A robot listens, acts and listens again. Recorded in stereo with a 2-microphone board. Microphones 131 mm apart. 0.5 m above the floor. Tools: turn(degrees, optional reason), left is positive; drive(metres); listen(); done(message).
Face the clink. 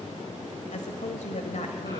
listen()
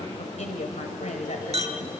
turn(degrees=-55, reason="The clink: about 55° right or 125° right.")
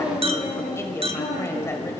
turn(degrees=-60, reason="So it is at 60° right.")
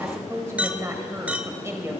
turn(degrees=-10, reason="The clink is now 10° right.")
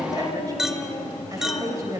done("Facing the clink.")